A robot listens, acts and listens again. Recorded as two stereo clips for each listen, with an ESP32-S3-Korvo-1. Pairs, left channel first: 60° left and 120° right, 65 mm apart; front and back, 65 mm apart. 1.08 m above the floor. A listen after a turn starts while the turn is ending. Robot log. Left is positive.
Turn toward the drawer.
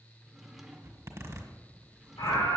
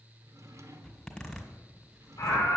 note: The drawer: 155° left.
cmd yaw +155
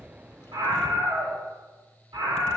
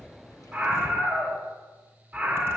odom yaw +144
note: Nothing new. It was at 10° left.
cmd yaw +10
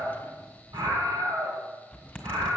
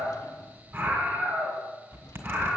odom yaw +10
cmd idle
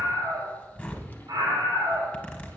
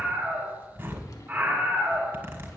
end: I heard a drawer from this way, but can't make it out now.